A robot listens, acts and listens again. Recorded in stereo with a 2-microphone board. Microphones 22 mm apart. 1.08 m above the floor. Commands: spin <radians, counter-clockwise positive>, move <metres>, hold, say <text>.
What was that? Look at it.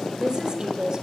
spin -0.61
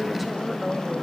say Found it: a woman speaking, straight ahead.